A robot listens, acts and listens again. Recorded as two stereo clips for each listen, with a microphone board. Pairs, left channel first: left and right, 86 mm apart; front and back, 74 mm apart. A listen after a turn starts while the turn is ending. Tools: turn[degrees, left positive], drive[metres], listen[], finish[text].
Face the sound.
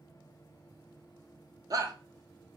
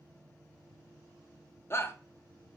Thought: The shout: 50° right.
Action: turn[-50]
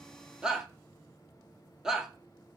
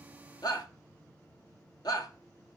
Action: finish[Found it: a shout, straight ahead.]